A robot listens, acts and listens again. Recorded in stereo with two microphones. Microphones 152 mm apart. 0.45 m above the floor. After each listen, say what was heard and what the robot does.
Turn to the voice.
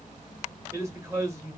The man speaking: about 20° right or 160° right. Turn 20° right.
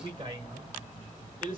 So it is at 135° right. Turn 135° right.
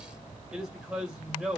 Found it: a man speaking, straight ahead, 1 to 2 m away.